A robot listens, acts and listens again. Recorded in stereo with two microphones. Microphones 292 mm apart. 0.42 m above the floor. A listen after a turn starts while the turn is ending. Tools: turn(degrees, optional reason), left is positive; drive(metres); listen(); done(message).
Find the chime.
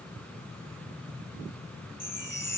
turn(degrees=75, reason="The chime: about 75° left or 105° left.")
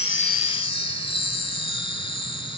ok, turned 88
turn(degrees=15, reason="So it is at 15° left.")
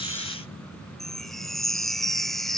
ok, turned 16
done("Facing the chime.")